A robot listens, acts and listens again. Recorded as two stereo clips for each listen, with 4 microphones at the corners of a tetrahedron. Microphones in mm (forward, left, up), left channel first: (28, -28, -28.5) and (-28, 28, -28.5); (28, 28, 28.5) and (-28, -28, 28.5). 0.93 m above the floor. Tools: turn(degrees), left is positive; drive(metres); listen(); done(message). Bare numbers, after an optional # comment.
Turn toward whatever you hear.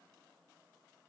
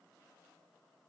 listen()
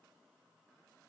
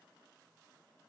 listen()
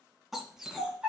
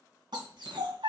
# The dog barking: 145° right.
turn(-145)
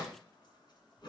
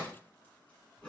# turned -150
listen()
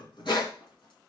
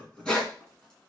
# The dog barking is now 35° right.
turn(-35)
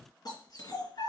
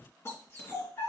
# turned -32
# The dog barking is now 10° right.
turn(-10)
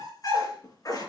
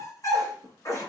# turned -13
done("Found it: a dog barking, straight ahead, 2 to 4 m away.")